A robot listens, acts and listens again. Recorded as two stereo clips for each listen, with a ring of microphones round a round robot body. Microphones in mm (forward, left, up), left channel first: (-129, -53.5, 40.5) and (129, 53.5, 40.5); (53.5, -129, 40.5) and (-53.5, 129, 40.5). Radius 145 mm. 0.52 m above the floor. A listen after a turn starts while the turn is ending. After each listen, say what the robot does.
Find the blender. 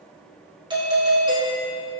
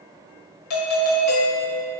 Keep listening.
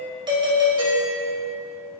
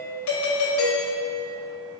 Keep listening.
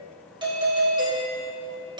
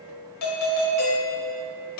I can't make out a blender, only a doorbell.